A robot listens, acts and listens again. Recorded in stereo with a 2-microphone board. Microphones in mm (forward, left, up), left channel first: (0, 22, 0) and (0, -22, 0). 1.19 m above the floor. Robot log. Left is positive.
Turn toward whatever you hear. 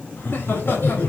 note: The laughter: about 60° left or 120° left.
cmd yaw +60
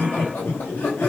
note: So it is at 55° left.
cmd yaw +55
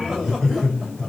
end: Facing the laughter, 2 to 4 m away.